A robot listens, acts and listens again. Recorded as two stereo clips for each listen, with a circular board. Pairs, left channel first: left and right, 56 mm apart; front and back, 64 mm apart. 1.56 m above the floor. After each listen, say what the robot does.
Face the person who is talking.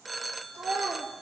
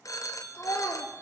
Turn 55° right.
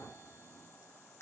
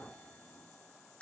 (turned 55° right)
Keep listening.
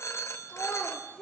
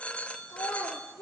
Turn 15° left.
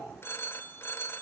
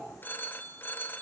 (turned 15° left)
Keep listening.
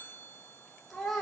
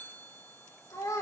Facing the child speaking, 2 to 4 m away.